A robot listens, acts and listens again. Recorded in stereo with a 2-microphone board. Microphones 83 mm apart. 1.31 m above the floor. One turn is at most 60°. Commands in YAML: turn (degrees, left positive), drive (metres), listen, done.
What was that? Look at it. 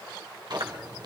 turn: -60
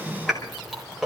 done: "Facing the chewing, 2 to 4 m away."